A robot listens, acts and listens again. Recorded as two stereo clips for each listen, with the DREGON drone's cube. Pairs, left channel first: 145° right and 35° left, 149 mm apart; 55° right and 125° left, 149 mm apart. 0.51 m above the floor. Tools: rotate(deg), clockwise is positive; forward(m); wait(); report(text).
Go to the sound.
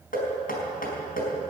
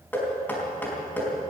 rotate(135)
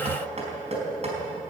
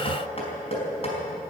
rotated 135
rotate(10)
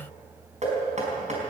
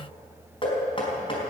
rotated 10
forward(1.0)
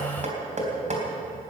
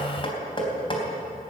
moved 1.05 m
forward(1.0)
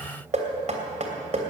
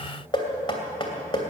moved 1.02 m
forward(1.0)
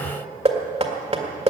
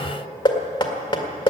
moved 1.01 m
forward(1.0)
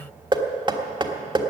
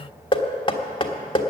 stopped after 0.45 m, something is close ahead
rotate(10)
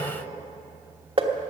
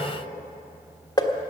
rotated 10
report("I am next to the knocking.")